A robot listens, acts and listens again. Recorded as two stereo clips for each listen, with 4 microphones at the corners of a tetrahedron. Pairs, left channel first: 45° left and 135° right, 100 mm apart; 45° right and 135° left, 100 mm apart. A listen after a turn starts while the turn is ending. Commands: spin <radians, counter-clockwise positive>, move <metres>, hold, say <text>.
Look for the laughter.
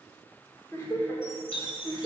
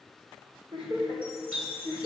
spin 1.92
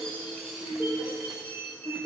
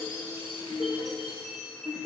spin 0.35
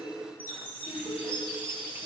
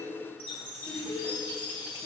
say Facing the laughter, over 4 m away.